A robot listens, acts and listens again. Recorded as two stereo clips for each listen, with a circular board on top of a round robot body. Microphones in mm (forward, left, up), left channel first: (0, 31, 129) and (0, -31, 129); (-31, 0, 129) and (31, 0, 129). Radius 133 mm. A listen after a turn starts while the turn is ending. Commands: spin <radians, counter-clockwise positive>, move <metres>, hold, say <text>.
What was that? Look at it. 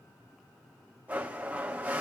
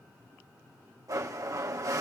spin -0.35
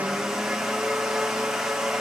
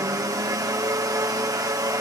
say Facing the blender.